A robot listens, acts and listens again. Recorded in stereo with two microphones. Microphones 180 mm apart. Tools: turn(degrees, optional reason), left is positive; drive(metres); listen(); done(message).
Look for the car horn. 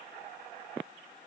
listen()
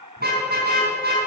turn(degrees=-65, reason="The car horn: about 65° right or 115° right.")
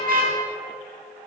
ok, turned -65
turn(degrees=-55, reason="So it is at 55° right.")
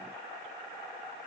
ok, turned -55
listen()
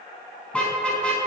done("Facing the car horn, over 4 m away.")